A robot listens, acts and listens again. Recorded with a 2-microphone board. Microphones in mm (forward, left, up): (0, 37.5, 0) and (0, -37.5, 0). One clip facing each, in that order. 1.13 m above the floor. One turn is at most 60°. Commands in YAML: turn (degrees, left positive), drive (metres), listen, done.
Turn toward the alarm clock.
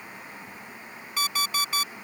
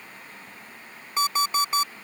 turn: -25
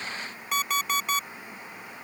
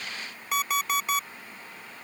done: "Found it: an alarm clock, straight ahead."